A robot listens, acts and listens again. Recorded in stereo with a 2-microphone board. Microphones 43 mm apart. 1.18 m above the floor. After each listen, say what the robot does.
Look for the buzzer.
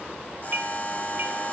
Turn 40° left.
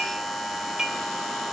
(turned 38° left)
Found it: a buzzer, straight ahead.